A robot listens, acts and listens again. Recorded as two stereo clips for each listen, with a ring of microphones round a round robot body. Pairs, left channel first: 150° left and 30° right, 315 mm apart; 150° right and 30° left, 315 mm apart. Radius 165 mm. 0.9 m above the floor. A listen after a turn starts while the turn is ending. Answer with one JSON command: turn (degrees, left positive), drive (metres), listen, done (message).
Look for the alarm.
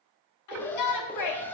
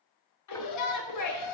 {"turn": -125}
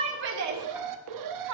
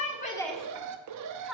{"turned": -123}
{"done": "Found it: an alarm, straight ahead."}